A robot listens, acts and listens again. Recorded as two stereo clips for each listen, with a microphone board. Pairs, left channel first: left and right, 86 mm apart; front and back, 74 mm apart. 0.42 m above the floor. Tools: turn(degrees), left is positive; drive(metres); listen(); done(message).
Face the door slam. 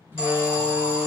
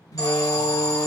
turn(degrees=-30)
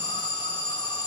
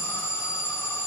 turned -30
done("Facing where the door slam came from. I can't hear it now.")